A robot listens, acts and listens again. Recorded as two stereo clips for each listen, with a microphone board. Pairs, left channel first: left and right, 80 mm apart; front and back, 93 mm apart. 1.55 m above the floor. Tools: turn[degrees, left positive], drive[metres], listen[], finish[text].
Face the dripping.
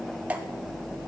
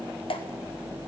Thought: The dripping: 20° right.
Action: turn[-20]
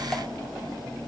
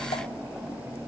Action: listen[]
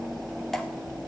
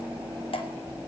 Action: finish[Found it: dripping, straight ahead.]